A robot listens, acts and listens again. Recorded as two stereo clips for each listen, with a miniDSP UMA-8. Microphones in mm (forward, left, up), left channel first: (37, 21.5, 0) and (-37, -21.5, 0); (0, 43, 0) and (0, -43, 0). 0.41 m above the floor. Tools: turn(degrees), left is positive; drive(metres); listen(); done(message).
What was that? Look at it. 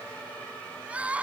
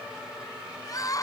turn(degrees=135)
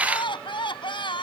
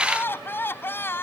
turn(degrees=30)
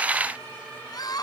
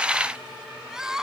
done("Facing the crying.")